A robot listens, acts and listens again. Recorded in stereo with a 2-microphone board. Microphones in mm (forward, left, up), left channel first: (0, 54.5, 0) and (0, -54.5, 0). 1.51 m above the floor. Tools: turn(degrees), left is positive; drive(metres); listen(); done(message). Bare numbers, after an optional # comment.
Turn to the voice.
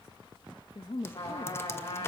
# The woman speaking: about 60° left or 120° left.
turn(60)
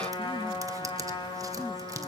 listen()
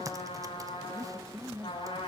done("Found it: a woman speaking, straight ahead, 1 to 2 m away.")